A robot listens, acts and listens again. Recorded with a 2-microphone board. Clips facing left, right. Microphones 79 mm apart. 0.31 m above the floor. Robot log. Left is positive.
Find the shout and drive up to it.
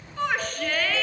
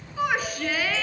cmd yaw -30
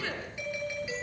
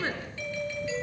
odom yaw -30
note: So it is at 140° right.
cmd yaw -140
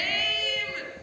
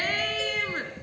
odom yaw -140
note: The shout is now 40° right.
cmd yaw -40
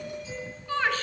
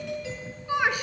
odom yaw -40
note: The shout is now 15° right.
cmd yaw -15
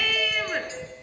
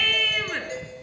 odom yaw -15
cmd fwd 1.0
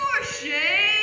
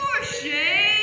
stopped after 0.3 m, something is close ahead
end: Something is in my way. I am facing the shout but have not reached it.